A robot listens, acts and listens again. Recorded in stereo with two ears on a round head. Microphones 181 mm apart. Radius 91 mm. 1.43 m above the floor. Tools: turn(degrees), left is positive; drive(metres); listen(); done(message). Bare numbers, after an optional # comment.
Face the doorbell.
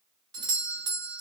# The doorbell: about 20° right or 160° right.
turn(-20)
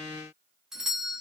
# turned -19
done("Found it: a doorbell, straight ahead.")